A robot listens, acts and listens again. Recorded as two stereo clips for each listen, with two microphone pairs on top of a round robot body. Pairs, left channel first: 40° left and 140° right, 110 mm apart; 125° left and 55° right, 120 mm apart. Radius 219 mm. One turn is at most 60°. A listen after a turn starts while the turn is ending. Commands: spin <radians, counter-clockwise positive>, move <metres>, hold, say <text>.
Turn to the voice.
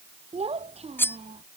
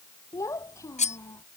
spin -1.05
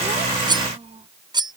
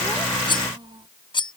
spin -1.05
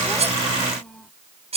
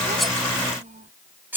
spin -0.79
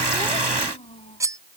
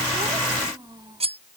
say Facing the child speaking.